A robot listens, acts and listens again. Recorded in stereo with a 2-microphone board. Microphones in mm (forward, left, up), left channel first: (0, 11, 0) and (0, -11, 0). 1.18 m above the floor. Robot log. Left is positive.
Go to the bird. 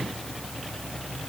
cmd idle
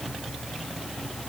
cmd idle
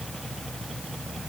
end: I can't make out a bird.